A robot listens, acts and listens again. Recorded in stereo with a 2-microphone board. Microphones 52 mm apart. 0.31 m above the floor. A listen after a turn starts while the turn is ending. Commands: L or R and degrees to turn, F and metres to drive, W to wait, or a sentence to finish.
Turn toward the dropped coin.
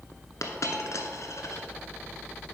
L90
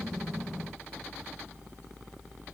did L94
I heard a dropped coin from this way, but can't make it out now.